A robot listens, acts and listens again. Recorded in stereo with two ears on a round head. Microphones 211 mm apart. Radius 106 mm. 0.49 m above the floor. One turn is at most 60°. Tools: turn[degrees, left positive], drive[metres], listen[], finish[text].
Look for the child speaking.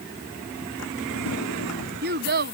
Thought: The child speaking: about 45° right or 135° right.
Action: turn[-45]
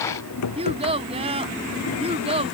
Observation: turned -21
Thought: So it is at 25° right.
Action: turn[-25]
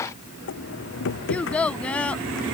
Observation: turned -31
Action: finish[Found it: a child speaking, straight ahead.]